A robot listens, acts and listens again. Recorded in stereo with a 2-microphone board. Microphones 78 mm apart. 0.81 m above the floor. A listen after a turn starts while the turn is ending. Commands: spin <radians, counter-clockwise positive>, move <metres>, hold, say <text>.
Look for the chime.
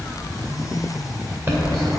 spin -0.52
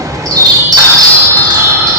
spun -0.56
spin -2.09
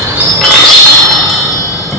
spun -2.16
say Found it: a chime, straight ahead.